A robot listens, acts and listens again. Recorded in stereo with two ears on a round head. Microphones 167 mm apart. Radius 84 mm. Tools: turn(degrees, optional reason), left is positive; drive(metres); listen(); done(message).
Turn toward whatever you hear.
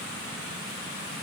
listen()
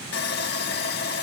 turn(degrees=55, reason="The sawing: about 55° left or 125° left.")
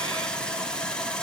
done("Facing the sawing.")